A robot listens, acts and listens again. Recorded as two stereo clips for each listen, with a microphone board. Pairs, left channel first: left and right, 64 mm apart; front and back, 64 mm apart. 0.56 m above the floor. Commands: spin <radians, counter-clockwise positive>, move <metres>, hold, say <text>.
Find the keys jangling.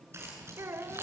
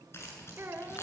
spin -0.79
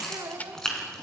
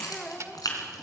spin 0.17
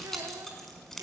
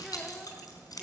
say Found it: keys jangling, straight ahead, over 4 m away.